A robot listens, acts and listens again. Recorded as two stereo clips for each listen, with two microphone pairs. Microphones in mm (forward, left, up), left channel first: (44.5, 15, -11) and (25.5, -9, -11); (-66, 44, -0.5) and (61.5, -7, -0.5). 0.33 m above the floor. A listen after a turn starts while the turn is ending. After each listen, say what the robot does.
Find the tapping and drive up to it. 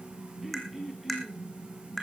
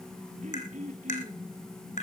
Turn 135° left.
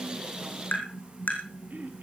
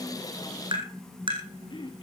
Turn 30° left.
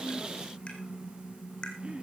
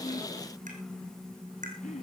Drive 1.0 m forward.
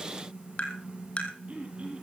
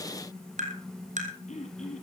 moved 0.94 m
Drive 1.0 m forward.
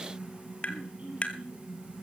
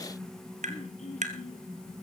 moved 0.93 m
Drive 1.0 m forward.
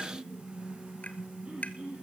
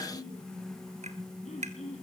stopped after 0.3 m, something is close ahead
Keep listening.
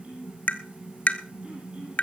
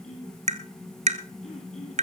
Turn 10° left.
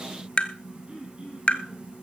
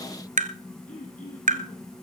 Arrived at the tapping, straight ahead.